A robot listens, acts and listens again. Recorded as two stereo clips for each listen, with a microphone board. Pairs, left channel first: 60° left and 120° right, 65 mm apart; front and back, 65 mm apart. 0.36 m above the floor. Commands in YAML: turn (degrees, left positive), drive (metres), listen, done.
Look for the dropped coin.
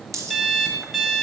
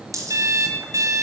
turn: -155
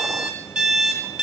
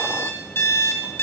done: "I heard a dropped coin from this way, but can't make it out now."